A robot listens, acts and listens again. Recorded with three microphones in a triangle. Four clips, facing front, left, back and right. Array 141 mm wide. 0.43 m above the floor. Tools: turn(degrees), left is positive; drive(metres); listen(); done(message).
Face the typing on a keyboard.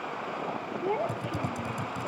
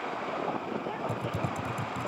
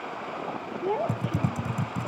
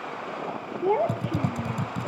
turn(degrees=-135)
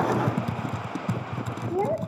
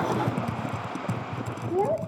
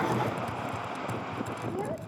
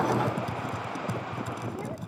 turn(degrees=15)
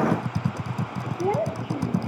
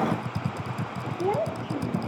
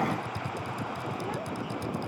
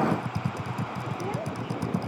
done("Facing the typing on a keyboard.")